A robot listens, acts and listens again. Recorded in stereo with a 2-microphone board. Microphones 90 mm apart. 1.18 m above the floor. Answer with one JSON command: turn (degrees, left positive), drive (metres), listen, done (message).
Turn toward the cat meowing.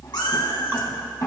{"turn": 60}
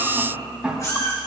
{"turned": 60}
{"turn": 35}
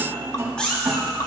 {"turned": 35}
{"turn": 10}
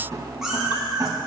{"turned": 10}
{"done": "Found it: a cat meowing, straight ahead."}